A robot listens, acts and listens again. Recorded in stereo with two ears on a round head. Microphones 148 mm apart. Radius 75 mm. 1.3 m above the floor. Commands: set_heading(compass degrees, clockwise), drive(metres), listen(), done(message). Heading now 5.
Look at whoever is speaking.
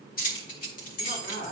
set_heading(295)
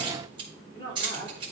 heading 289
set_heading(254)
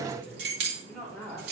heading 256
done("Facing the woman speaking.")